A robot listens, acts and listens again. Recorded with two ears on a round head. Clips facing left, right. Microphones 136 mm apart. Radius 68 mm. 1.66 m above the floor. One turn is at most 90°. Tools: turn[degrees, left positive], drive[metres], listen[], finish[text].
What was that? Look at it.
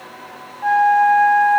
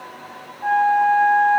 Thought: The flute: about 40° left or 140° left.
Action: turn[40]
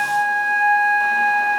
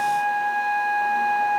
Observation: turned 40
Thought: So it is at 100° left.
Action: turn[90]
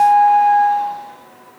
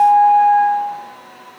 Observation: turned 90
Thought: The flute is now 15° left.
Action: turn[15]
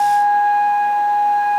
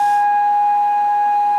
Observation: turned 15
Action: finish[Facing the flute, over 4 m away.]